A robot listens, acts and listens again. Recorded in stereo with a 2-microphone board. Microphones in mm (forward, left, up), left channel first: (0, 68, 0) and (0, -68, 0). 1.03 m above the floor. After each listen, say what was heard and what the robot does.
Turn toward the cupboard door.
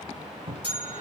The cupboard door: about 40° right or 140° right. Turn 40° right.
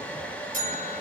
Keep listening.
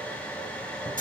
Keep listening.
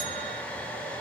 I heard a cupboard door, but can't make it out now. It was about straight ahead or 100° right.